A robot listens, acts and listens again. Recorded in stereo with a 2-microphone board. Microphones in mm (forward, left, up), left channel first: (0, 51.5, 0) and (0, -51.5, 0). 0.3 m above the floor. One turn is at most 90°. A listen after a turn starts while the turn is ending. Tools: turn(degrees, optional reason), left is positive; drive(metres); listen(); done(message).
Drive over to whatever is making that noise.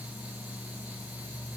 listen()
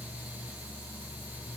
listen()
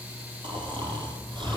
turn(degrees=-50, reason="The snoring: about 50° right or 130° right.")
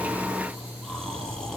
drive(metres=1.0)
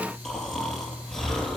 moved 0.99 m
drive(metres=1.0)
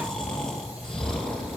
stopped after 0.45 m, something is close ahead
done("Something is in my way. I am facing the snoring but have not reached it.")